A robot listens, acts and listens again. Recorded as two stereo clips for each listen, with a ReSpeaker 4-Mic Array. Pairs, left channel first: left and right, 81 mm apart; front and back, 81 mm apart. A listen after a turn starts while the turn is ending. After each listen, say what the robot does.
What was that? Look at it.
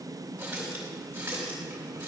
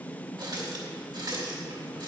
Turn 155° right.
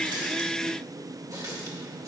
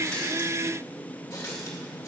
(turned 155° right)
Turn 50° right.
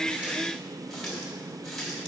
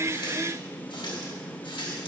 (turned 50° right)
Found it: a running tap, straight ahead.